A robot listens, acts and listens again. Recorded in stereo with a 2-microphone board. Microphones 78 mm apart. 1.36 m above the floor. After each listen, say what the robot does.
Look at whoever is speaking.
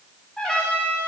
Keep listening.
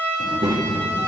Turn 70° right.
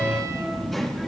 Found it: a child speaking, straight ahead.